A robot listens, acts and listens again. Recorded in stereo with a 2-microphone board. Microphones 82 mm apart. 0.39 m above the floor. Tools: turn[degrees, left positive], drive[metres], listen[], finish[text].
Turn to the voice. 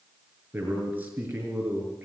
Thought: The man speaking: about 20° right or 160° right.
Action: turn[-20]
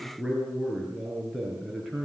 Action: finish[Facing the man speaking.]